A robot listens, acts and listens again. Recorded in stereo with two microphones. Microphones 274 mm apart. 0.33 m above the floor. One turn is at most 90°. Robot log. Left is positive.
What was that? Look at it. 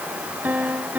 cmd yaw -30
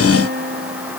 note: So it is at 145° right.
cmd yaw -90
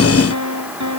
note: The piano is now 85° right.
cmd yaw -85
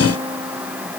note: The piano is now 20° right.
cmd yaw -20
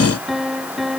end: Found it: a piano, straight ahead.